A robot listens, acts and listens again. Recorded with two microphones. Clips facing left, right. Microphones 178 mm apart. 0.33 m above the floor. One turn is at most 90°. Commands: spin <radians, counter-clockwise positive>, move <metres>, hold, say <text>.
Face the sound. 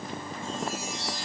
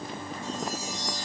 spin -0.70
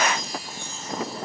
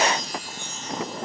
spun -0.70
spin -1.57
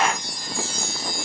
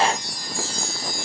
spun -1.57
spin -0.70
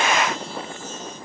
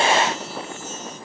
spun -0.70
hold
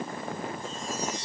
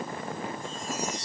spin -0.17
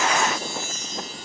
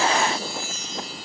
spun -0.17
say Facing the chime, 2 to 4 m away.